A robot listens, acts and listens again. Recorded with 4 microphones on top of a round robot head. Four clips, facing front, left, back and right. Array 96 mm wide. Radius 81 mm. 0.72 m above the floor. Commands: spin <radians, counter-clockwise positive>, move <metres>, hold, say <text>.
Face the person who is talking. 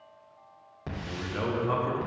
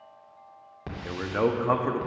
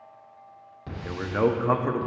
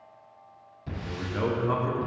spin 2.44
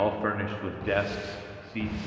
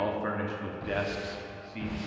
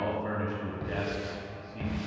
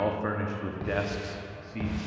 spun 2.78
spin -0.26
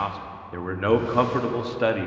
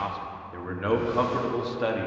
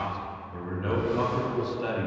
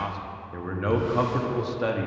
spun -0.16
say Found it: a man speaking, straight ahead.